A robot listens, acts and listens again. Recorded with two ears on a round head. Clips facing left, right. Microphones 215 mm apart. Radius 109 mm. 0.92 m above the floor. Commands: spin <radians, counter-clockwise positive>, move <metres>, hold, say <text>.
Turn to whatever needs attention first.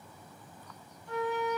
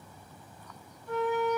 hold
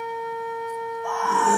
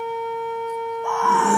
spin -0.96
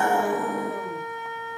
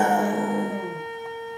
spin -0.35
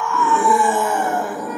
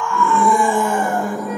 say Facing the scream.